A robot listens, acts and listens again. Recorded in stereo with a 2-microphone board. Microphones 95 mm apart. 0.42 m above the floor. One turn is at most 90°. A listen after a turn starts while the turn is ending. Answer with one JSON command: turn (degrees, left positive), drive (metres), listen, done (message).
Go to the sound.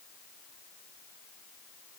{"listen": true}
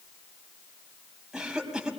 {"turn": -30}
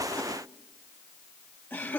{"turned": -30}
{"turn": 25}
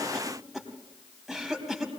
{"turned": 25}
{"drive": 1.0}
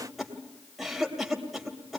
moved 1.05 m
{"drive": 1.0}
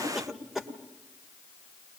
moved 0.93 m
{"drive": 1.0}
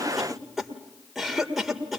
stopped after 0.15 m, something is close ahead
{"done": "Arrived at the cough, straight ahead."}